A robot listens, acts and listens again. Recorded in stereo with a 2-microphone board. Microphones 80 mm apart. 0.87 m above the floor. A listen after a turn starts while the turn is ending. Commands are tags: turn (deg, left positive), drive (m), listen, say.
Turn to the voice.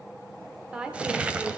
<turn deg="-30"/>
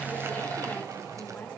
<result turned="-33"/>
<listen/>
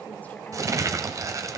<listen/>
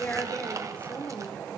<turn deg="20"/>
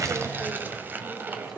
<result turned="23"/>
<listen/>
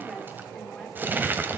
<listen/>
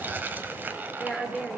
<say>Found it: a woman speaking, straight ahead.</say>